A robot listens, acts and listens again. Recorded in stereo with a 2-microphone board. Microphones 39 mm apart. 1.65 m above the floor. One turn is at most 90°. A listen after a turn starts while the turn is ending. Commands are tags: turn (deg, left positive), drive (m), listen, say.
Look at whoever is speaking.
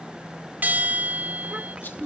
<turn deg="-30"/>
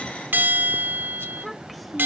<say>Facing the child speaking.</say>